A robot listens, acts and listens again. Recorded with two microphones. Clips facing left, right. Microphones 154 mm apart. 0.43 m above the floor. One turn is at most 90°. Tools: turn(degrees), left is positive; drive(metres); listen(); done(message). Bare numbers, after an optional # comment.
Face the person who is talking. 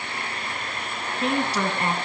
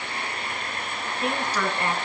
# The woman speaking: about 30° left or 150° left.
turn(30)
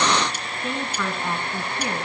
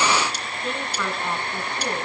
done("Facing the woman speaking, over 4 m away.")